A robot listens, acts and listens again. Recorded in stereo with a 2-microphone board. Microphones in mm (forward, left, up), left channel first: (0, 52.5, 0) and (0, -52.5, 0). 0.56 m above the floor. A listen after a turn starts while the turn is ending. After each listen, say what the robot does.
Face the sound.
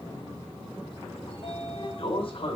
Turn 55° left.
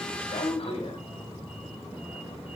Turn 65° left.
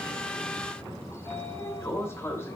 Turn 20° left.
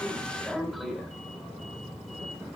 Found it: a sliding door, straight ahead, 2 to 4 m away.